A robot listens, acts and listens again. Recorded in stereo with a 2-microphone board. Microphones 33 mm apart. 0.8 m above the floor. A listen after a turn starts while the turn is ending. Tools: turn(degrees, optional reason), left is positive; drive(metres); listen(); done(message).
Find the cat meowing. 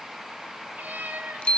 turn(degrees=-60, reason="The cat meowing: about 60° right or 120° right.")
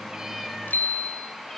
listen()
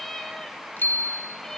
turn(degrees=20, reason="So it is at 20° left.")
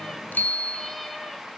listen()
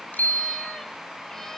listen()
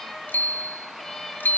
turn(degrees=15, reason="The cat meowing is now 15° left.")
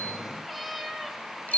done("Facing the cat meowing, 2 to 4 m away.")